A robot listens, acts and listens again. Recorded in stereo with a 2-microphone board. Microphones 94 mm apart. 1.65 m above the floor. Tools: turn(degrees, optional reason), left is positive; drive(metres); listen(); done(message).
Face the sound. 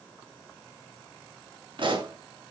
turn(degrees=-55, reason="The pop: about 55° right or 125° right.")
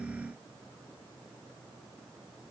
listen()
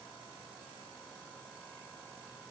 done("I heard a pop, but can't make it out now. It was about straight ahead or 70° right.")